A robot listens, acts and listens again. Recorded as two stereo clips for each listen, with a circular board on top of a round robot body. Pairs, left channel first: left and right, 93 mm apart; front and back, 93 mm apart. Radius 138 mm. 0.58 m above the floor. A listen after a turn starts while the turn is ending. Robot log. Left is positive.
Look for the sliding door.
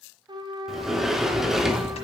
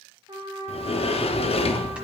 end: Facing the sliding door, under 1 m away.